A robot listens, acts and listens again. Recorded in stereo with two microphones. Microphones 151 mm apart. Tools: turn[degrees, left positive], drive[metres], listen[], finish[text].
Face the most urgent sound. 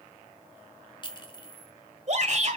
Thought: The shout: about 55° right or 125° right.
Action: turn[-55]
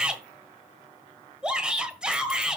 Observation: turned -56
Action: finish[Facing the shout.]